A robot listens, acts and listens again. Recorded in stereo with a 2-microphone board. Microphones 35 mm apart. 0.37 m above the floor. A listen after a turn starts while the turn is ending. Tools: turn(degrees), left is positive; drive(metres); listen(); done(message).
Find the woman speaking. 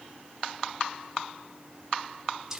listen()
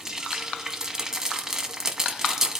listen()
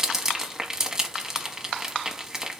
done("I can't make out a woman speaking, only frying.")